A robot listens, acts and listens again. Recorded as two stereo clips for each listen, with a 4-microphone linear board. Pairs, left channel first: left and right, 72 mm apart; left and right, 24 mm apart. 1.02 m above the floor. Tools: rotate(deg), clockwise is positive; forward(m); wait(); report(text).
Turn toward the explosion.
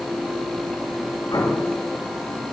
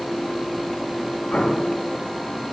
rotate(-75)
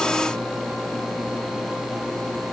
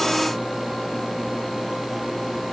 wait()
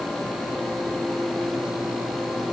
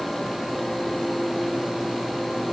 report("I heard an explosion, but can't make it out now. It was about straight ahead or 30° left.")